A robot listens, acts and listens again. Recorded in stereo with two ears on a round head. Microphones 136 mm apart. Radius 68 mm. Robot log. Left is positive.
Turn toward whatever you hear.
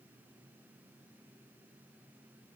cmd idle
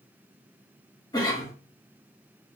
note: The cough: about 25° left or 155° left.
cmd yaw +25
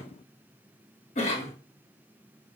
note: So it is at 130° left.
cmd yaw +130
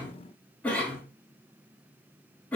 note: The cough is now 10° left.
cmd yaw +10
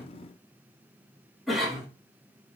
end: Facing the cough, 1 to 2 m away.